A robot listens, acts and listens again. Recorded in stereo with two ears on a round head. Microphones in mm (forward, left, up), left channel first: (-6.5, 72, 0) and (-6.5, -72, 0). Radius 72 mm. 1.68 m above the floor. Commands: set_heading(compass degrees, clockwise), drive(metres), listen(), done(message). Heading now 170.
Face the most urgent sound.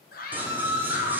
set_heading(110)
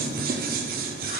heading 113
listen()
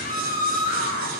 set_heading(58)
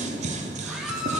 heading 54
done("Found it: a scream, straight ahead, 1 to 2 m away.")